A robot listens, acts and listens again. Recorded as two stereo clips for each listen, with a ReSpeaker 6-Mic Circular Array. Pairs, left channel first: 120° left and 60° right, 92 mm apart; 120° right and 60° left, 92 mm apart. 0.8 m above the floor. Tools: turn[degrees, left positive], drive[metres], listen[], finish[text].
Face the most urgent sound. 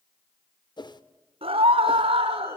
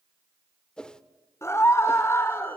Thought: The scream: 60° right.
Action: turn[-60]
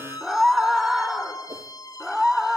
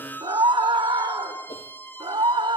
Thought: The scream is now 30° left.
Action: turn[30]
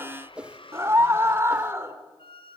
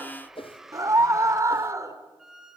Action: finish[Found it: a scream, straight ahead.]